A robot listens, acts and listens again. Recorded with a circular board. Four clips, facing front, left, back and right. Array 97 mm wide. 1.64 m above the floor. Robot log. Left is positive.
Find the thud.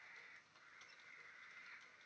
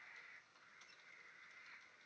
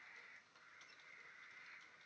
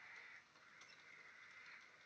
cmd idle
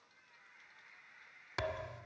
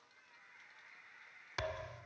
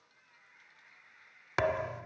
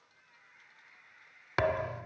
note: The thud: 130° right.
cmd yaw -130
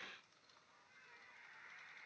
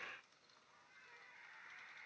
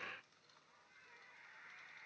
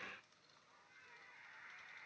end: Facing where the thud came from. I can't hear it now.